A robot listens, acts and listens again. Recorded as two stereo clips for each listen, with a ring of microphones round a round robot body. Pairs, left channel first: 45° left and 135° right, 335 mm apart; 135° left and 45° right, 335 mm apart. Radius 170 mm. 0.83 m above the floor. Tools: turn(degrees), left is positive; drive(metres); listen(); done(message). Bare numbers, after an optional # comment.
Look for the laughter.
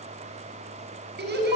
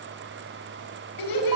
# The laughter: 165° left.
turn(165)
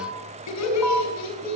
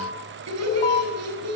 done("Facing the laughter, over 4 m away.")